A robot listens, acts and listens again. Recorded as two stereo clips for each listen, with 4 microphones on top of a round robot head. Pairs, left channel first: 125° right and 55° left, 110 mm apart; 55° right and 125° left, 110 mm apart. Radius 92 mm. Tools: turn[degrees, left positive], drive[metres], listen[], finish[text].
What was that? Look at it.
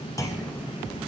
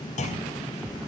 Thought: The clunk: 60° right.
Action: turn[-60]
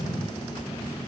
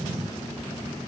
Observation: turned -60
Action: finish[Facing where the clunk came from. I can't hear it now.]